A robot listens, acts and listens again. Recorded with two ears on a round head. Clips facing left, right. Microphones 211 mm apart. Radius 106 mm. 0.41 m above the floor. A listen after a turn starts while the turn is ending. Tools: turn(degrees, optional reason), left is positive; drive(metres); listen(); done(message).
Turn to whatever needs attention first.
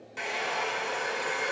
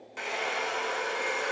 listen()
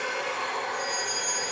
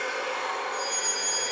turn(degrees=-60, reason="The fire alarm: about 60° right or 120° right.")
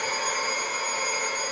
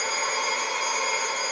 listen()
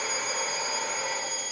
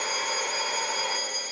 turn(degrees=-10, reason="So it is at 10° right.")
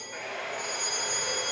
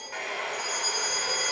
done("Found it: a fire alarm, straight ahead.")